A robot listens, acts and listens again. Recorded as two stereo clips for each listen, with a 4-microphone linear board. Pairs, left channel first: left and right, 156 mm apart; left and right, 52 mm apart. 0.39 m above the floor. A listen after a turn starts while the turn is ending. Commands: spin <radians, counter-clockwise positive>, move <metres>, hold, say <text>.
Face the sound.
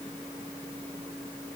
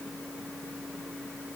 hold
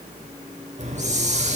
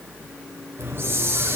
spin -0.79
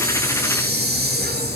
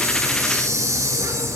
spin -1.57
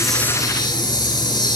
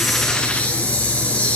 spin 0.44
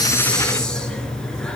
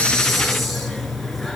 say Found it: a hiss, straight ahead.